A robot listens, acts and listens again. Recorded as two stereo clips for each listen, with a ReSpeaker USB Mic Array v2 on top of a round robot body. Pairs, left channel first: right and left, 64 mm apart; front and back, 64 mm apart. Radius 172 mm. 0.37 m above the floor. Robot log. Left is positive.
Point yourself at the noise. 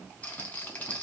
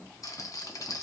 note: The rattle: 25° right.
cmd yaw -25
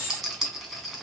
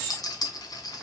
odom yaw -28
end: Found it: a rattle, straight ahead, 1 to 2 m away.